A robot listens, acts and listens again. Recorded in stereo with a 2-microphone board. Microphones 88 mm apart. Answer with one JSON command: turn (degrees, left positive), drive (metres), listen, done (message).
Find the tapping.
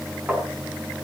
{"turn": -20}
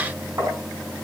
{"turn": -140}
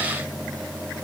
{"listen": true}
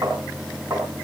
{"turn": -40}
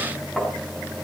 {"done": "Facing the tapping."}